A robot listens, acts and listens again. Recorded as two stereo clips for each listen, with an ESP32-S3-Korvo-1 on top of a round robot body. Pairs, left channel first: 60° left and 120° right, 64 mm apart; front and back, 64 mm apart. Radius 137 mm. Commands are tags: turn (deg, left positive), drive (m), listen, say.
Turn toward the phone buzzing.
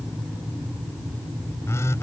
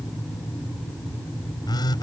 <turn deg="10"/>
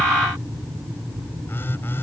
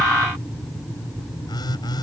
<say>Found it: a phone buzzing, straight ahead.</say>